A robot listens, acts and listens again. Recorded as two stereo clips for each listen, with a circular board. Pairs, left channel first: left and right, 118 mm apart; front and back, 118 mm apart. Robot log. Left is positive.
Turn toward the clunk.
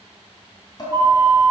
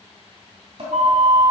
cmd idle
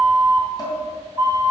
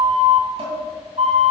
cmd idle
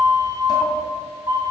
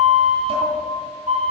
end: I can't make out a clunk to turn to.